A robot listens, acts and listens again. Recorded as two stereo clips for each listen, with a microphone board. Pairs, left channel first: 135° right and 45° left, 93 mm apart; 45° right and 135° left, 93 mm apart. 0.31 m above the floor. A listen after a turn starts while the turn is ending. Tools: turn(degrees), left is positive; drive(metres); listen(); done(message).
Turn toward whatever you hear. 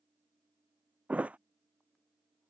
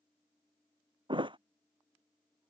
turn(degrees=120)
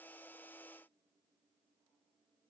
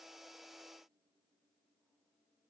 done("I heard a thud from this way, but can't make it out now.")